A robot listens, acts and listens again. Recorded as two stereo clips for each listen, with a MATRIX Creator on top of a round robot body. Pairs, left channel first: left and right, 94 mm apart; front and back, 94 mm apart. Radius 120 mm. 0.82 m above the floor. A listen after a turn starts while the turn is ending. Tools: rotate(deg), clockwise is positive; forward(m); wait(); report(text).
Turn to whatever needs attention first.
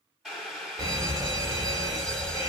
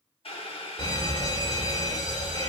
rotate(40)
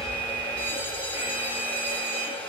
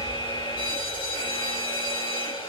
rotate(20)
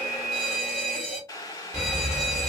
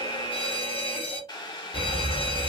report("Facing the fire alarm.")